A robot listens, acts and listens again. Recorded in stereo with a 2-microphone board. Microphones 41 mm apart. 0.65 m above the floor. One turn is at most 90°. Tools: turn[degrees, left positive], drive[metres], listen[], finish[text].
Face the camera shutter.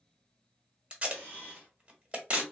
Thought: The camera shutter: about 40° right or 140° right.
Action: turn[-40]
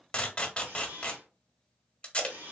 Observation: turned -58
Thought: So it is at 80° right.
Action: turn[-80]
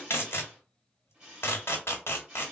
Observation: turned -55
Thought: The camera shutter is now 25° right.
Action: turn[-25]
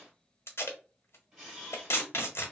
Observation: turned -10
Thought: The camera shutter is now 15° right.
Action: turn[-15]
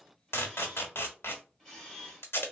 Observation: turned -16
Action: finish[Facing the camera shutter.]